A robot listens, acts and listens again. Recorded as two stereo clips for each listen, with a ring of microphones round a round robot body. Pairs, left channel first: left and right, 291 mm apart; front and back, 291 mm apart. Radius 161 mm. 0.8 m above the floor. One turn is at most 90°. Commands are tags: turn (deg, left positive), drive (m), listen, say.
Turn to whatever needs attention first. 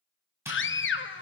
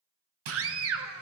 <turn deg="90"/>
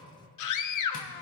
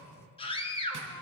<turn deg="70"/>
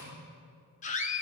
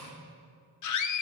<turn deg="25"/>
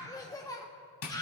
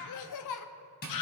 <turn deg="10"/>
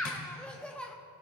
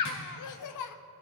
<say>Facing the scream, under 1 m away.</say>